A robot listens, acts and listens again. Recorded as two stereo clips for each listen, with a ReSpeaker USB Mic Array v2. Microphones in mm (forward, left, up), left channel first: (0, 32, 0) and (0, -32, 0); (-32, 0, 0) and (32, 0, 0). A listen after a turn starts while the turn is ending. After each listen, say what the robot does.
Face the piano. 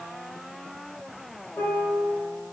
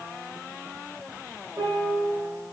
Turn 40° left.
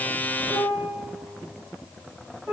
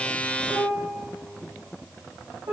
Facing the piano.